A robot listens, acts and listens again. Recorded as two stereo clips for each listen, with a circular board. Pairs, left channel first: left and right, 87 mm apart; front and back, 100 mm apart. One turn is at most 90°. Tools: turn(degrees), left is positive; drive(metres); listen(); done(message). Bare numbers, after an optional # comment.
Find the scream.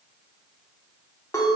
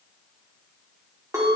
listen()
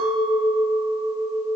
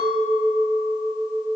listen()
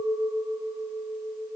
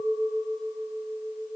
done("I can't make out a scream, only a clink.")